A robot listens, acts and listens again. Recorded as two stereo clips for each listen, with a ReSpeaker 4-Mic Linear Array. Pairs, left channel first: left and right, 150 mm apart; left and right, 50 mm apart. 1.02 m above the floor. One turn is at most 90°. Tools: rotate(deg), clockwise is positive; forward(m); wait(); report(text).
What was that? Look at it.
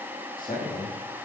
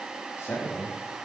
rotate(-65)
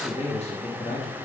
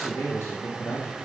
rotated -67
rotate(-50)
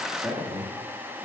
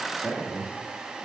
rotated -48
report("Facing the man speaking, 1 to 2 m away.")